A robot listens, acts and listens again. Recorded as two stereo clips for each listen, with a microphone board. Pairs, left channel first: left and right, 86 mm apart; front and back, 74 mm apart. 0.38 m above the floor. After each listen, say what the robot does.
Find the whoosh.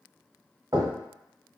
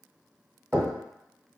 Keep listening.
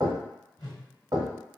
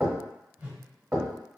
Turn 115° left.
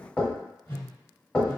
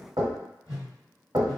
Turn 35° left.
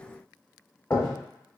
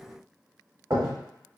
Keep listening.
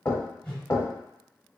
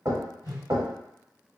Turn 10° left.
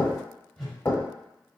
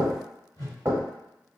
Facing the whoosh, 1 to 2 m away.